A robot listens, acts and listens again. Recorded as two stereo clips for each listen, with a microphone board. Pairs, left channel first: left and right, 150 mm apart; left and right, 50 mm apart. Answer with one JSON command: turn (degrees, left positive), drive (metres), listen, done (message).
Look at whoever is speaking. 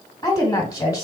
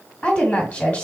{"turn": 25}
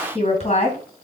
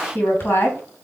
{"turn": 125}
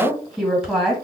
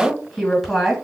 {"done": "Facing the woman speaking, 1 to 2 m away."}